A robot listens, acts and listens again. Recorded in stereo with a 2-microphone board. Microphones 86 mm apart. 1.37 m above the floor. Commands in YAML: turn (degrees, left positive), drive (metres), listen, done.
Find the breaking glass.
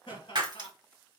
turn: -55
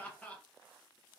listen: true
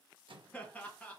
done: "I heard breaking glass, but can't make it out now. It was about straight ahead or 70° right."